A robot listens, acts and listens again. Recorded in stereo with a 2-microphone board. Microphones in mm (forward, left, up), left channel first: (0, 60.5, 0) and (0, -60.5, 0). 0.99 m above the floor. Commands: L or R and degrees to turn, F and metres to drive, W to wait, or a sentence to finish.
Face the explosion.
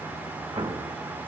R40
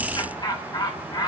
W
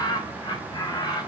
I heard an explosion, but can't make it out now. It was about straight ahead or 100° right.